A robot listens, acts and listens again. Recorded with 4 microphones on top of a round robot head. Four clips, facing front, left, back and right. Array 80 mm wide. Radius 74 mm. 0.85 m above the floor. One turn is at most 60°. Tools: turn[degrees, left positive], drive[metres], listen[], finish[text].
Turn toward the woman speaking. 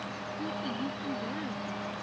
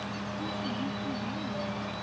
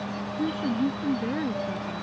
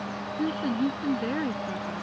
Thought: The woman speaking: 120° right.
Action: turn[-60]
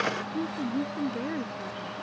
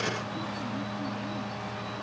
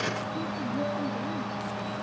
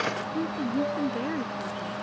Thought: The woman speaking is now 55° right.
Action: turn[-55]
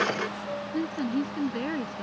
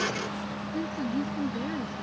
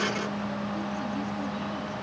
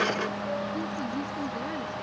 Action: finish[Found it: a woman speaking, straight ahead.]